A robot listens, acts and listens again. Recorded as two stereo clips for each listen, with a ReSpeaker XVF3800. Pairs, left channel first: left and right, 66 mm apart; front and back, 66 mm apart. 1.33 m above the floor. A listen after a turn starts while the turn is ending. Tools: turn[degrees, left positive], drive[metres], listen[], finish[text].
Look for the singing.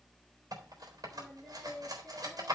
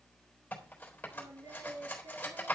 Thought: The singing: 165° left.
Action: turn[165]
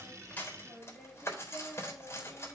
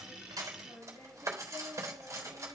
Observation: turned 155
Thought: The singing is now 10° left.
Action: turn[10]
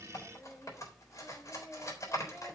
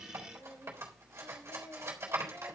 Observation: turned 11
Action: finish[Found it: singing, straight ahead, over 4 m away.]